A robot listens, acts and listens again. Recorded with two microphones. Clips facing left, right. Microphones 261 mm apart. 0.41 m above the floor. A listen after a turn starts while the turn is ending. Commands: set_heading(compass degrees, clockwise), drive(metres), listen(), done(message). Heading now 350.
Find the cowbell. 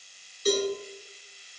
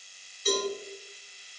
set_heading(310)
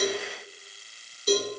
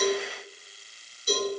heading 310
set_heading(215)
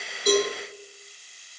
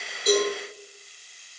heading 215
listen()
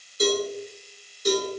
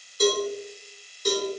set_heading(190)
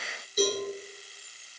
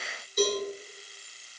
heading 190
done("Found it: a cowbell, straight ahead.")